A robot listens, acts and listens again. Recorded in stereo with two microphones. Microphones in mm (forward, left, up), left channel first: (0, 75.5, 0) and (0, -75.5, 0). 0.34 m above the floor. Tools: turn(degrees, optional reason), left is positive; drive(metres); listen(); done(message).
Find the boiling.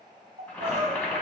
turn(degrees=30)
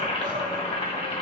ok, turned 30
turn(degrees=135, reason="So it is at 135° left.")
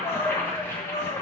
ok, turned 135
turn(degrees=20, reason="The boiling is now 20° left.")
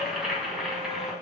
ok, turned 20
done("Found it: boiling, straight ahead, 2 to 4 m away.")